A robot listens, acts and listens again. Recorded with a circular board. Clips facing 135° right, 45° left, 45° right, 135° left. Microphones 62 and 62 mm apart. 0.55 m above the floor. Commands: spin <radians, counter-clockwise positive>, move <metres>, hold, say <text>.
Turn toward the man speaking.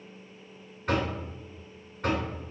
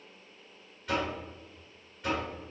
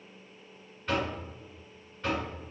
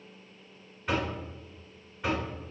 hold
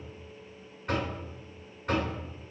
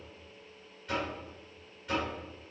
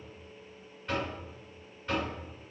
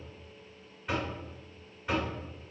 hold
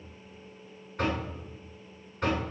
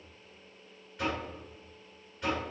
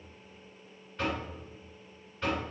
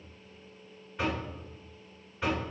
say I can't make out a man speaking, only knocking.